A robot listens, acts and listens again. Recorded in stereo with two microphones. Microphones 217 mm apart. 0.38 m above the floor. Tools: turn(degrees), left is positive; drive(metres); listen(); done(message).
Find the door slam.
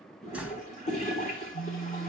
turn(degrees=-30)
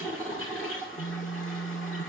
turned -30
listen()
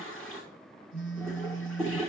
done("I heard a door slam, but can't make it out now. It was about 25° left or 145° right.")